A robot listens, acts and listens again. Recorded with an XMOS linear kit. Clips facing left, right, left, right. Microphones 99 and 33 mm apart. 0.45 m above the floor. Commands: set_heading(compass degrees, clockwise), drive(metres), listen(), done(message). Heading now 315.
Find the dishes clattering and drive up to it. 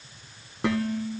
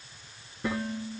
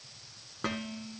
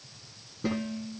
set_heading(225)
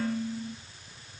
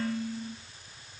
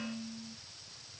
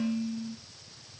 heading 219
drive(1.0)
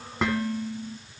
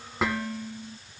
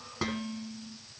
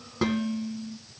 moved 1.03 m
drive(1.0)
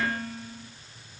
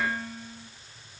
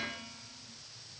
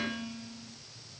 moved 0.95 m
drive(1.0)
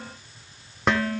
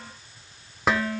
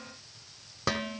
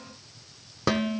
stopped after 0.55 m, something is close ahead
done("I am next to the dishes clattering.")